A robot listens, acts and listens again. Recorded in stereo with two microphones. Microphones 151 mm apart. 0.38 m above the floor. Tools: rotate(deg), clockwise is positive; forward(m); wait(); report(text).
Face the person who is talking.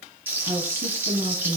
rotate(35)
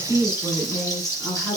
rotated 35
rotate(-10)
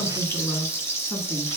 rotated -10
rotate(-10)
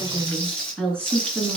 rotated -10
rotate(-10)
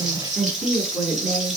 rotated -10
report("Facing the woman speaking.")